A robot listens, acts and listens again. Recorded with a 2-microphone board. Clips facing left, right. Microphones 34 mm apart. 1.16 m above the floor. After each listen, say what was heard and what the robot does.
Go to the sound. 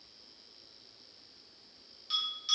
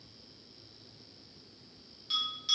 Turn 30° right.
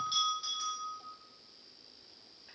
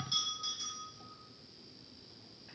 So it is at 20° left. Turn 20° left.
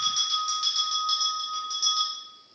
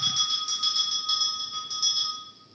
Drive 1.0 m forward.
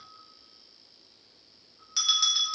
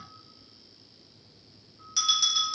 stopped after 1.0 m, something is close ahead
The bell is now 10° left. Turn 10° left.
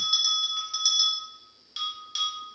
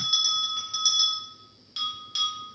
Arrived at the bell, straight ahead.